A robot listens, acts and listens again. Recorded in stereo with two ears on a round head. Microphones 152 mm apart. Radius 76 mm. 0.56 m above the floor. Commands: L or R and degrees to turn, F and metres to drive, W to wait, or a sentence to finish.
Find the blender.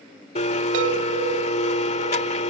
L40
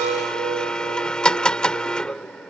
Facing the blender.